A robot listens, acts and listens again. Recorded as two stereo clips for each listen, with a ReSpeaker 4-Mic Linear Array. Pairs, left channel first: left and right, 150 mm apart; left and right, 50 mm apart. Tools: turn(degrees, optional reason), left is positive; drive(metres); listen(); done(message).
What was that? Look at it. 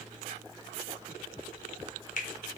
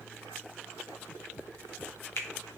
turn(degrees=60, reason="The finger snap: about 60° left or 120° left.")
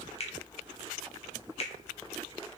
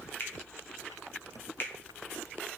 turn(degrees=50, reason="So it is at 50° left.")
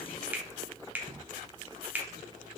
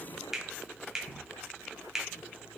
turn(degrees=-10, reason="The finger snap is now 10° right.")
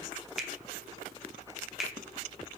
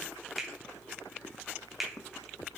done("Found it: a finger snap, straight ahead, under 1 m away.")